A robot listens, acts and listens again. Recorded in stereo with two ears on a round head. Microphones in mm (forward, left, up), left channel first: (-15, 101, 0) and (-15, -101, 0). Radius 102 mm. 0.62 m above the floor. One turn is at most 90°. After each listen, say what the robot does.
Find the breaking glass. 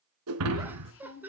Turn 90° right.
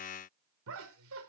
I heard breaking glass from this way, but can't make it out now.